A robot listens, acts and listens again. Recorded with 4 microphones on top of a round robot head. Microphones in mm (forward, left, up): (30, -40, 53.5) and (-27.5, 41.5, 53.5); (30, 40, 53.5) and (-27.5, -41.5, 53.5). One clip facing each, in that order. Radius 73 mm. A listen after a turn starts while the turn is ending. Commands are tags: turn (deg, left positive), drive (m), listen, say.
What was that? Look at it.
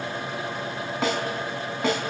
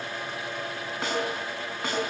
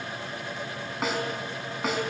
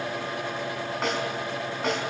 <turn deg="-30"/>
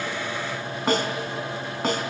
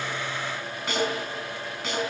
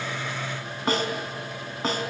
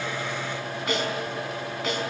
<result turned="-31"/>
<say>Facing the snare drum, 2 to 4 m away.</say>